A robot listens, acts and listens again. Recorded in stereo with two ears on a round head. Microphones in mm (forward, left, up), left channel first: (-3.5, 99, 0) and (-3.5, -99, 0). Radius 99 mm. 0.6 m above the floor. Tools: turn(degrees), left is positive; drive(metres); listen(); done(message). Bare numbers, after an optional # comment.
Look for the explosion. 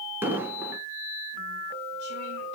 turn(-30)
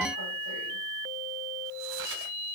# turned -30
listen()
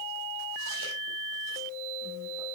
done("I heard an explosion, but can't make it out now. It was about 20° left or 140° right.")